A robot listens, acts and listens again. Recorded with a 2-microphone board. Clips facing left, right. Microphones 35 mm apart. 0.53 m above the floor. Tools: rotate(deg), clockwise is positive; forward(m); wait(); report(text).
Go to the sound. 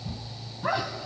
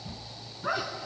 rotate(-55)
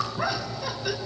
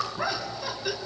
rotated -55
forward(1.0)
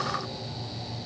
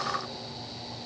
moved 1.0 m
wait()
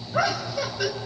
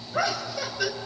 forward(1.0)
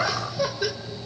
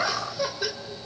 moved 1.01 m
forward(1.0)
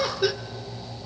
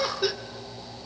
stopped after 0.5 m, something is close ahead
report("Arrived at the laughter, straight ahead.")